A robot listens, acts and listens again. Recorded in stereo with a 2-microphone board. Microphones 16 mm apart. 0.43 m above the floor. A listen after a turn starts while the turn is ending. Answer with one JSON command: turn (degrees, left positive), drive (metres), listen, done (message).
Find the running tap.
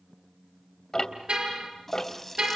{"turn": 30}
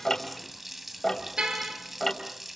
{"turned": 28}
{"turn": -20}
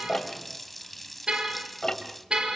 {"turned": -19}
{"done": "Facing the running tap, 1 to 2 m away."}